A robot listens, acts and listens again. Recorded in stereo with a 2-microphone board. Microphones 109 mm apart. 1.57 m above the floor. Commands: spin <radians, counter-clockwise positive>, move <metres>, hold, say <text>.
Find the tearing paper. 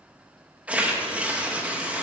spin -0.52
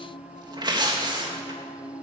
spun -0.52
spin -2.44
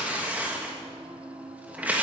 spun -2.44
spin -0.26
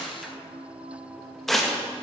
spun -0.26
say Facing the tearing paper.